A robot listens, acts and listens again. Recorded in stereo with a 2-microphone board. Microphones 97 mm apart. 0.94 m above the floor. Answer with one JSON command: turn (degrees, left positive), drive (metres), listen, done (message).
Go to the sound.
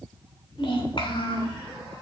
{"turn": 60}
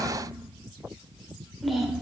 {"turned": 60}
{"drive": 1.0}
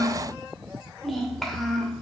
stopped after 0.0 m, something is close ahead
{"done": "Blocked. The child speaking is further on, straight ahead."}